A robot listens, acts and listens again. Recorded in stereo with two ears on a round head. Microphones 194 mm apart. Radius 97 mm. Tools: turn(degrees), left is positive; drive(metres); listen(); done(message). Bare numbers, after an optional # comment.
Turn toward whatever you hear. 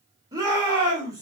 # The shout: about 15° right or 165° right.
turn(-15)
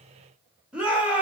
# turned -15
done("Facing the shout.")